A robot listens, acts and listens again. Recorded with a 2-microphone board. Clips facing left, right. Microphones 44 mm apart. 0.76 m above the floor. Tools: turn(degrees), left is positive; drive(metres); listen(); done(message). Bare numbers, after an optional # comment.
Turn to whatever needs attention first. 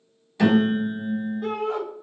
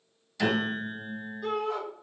# The shout: about 50° left or 130° left.
turn(50)
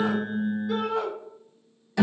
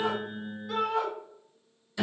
done("Facing the shout, 1 to 2 m away.")